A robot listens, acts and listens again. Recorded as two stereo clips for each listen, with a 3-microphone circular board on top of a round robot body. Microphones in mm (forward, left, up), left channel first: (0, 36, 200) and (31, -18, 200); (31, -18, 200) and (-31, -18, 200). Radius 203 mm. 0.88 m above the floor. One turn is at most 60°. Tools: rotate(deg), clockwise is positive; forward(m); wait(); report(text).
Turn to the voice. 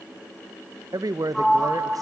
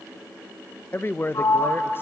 rotate(55)
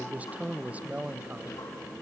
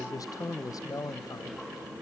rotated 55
rotate(-10)
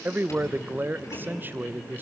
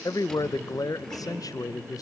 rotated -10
report("Facing the man speaking.")